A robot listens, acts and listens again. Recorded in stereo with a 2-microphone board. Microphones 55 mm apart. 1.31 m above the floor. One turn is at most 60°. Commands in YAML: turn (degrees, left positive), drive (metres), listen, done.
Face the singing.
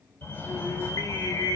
turn: 60
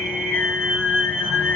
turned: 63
turn: 35
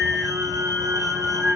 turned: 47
turn: -10
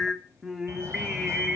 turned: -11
done: "Facing the singing."